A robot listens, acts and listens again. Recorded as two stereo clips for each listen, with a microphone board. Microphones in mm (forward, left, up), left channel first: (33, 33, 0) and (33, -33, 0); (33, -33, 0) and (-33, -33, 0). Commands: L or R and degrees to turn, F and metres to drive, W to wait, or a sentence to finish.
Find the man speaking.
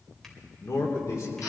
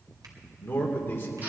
L55
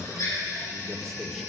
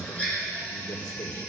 Facing the man speaking.